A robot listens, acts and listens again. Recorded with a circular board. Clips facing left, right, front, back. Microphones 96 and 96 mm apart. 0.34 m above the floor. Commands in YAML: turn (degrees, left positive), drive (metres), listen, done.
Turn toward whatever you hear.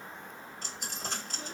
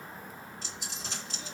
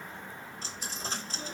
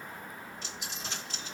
turn: 50
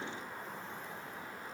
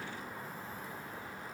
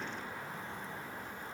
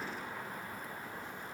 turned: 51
done: "I heard a dropped coin from this way, but can't make it out now."